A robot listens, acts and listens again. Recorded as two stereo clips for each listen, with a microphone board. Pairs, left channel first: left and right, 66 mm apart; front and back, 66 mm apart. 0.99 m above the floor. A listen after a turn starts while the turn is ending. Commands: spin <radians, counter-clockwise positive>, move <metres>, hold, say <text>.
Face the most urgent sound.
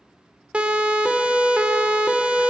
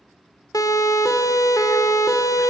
spin -0.35
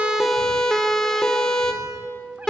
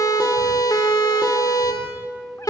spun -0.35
say Facing the siren, over 4 m away.